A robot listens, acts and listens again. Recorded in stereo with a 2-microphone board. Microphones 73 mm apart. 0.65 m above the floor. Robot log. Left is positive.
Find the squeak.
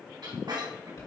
cmd yaw -90
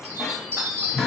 end: Facing the squeak.